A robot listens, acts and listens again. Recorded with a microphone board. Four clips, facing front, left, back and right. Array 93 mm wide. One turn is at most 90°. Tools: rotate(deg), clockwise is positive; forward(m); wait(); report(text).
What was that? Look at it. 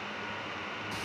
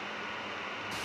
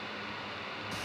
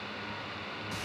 wait()
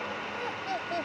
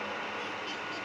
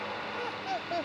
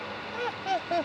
rotate(90)
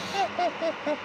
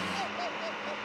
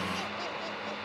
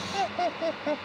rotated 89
rotate(35)
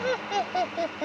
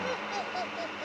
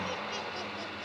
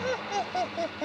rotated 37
rotate(25)
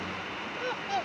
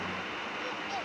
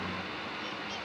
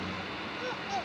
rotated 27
rotate(10)
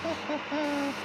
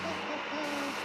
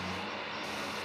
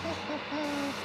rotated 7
report("Found it: laughter, straight ahead.")